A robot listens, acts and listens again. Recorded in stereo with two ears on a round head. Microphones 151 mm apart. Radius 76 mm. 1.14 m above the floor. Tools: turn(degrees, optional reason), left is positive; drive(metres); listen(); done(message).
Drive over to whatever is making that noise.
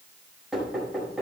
turn(degrees=-30)
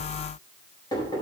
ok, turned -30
turn(degrees=25, reason="So it is at 25° left.")
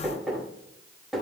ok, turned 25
drive(metres=1.0)
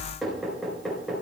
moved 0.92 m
drive(metres=1.0)
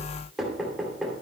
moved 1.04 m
drive(metres=1.0)
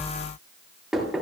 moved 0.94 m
drive(metres=1.0)
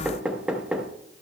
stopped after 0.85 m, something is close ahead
done("Arrived at the knocking, straight ahead.")